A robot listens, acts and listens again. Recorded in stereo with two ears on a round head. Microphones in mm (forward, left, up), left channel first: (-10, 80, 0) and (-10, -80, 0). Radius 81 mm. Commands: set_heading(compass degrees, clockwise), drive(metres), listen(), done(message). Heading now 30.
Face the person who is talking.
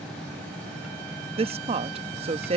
set_heading(65)
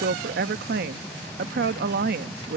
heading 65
set_heading(170)
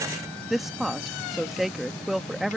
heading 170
done("Facing the woman speaking.")